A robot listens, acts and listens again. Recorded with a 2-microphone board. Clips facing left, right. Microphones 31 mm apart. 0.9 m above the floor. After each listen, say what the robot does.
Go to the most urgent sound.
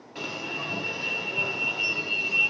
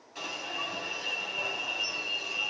Turn 25° left.
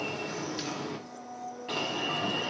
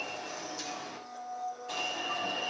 Turn 135° left.
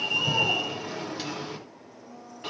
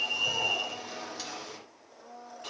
Turn 30° left.
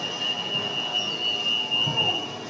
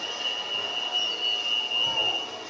Turn 10° right.
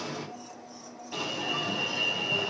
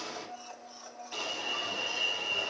Drive 1.0 m forward.
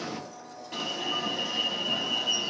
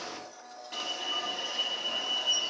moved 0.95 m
Drive 1.0 m forward.
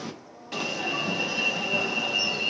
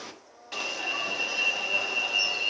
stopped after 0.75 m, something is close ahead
Arrived at the alarm, straight ahead.